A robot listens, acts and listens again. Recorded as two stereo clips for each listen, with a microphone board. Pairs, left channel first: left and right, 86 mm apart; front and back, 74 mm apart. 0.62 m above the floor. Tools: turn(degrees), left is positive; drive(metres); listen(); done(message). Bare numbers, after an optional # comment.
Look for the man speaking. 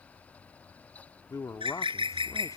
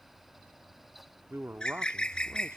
# The man speaking: 130° left.
turn(130)
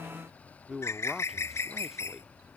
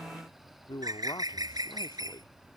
done("Facing the man speaking.")